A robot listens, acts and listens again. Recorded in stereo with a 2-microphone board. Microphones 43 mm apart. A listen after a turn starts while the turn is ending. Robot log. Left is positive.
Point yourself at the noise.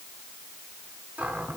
note: The cupboard door: about 40° right or 140° right.
cmd yaw -40
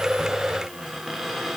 end: Found it: a cupboard door, straight ahead.